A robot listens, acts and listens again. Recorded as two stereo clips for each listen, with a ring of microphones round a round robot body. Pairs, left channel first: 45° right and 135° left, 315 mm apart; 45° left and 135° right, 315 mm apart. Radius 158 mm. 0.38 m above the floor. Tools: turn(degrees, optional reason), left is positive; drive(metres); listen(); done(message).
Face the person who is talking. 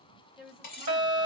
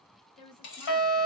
turn(degrees=50, reason="The woman speaking: 50° left.")
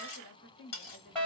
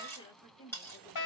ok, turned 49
done("Found it: a woman speaking, straight ahead.")